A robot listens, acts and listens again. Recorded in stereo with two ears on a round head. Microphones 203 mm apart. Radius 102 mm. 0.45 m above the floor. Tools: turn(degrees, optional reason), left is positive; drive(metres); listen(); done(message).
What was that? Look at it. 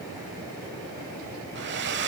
turn(degrees=-50, reason="The hair dryer: about 50° right or 130° right.")
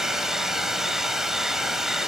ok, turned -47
done("Facing the hair dryer.")